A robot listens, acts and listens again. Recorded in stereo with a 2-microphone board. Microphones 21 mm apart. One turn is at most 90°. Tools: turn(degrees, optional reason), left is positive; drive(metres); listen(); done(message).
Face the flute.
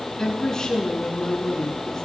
listen()
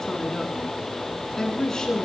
listen()
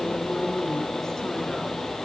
done("I can't make out a flute to turn to.")